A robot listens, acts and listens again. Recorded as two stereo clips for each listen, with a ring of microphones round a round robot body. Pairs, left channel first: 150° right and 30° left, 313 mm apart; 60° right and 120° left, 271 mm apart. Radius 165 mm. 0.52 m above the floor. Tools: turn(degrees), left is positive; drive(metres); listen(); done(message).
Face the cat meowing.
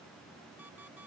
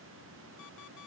listen()
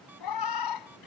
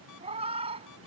turn(degrees=-170)
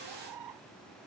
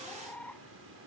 turn(degrees=25)
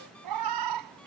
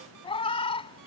turn(degrees=10)
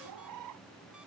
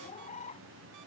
done("Facing the cat meowing.")